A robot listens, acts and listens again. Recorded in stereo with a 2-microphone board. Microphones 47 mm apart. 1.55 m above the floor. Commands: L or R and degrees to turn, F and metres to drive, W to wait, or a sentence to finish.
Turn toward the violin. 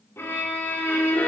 L60
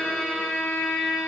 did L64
Found it: a violin, straight ahead.